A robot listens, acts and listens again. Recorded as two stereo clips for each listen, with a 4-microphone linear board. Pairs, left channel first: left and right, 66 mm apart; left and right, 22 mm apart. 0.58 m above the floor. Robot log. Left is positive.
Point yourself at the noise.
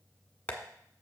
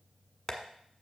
note: The tapping: about 20° left or 160° left.
cmd yaw +20
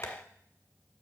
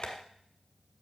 note: So it is at 135° left.
cmd yaw +135
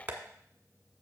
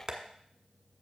note: The tapping is now 25° right.
cmd yaw -25
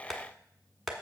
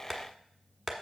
end: Facing the tapping, 1 to 2 m away.